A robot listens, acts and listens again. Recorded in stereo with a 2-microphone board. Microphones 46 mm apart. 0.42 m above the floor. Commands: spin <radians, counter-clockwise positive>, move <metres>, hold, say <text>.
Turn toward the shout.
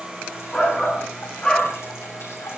spin 0.26
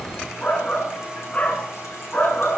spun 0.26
spin 2.53
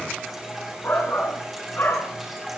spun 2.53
spin 0.87
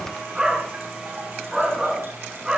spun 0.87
spin -0.26
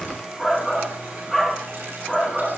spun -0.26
say Facing the shout.